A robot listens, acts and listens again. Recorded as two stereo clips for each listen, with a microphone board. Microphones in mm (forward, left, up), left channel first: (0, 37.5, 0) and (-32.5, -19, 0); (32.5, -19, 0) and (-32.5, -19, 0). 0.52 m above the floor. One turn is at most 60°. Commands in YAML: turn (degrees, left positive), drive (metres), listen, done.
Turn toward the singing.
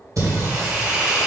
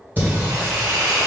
turn: -60
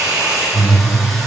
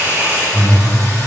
turn: -30
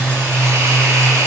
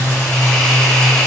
turn: 35
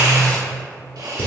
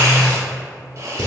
turn: 60
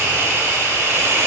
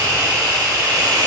listen: true
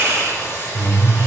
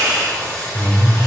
turn: 40
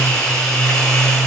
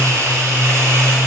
turn: -15
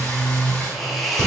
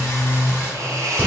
done: "Facing the singing."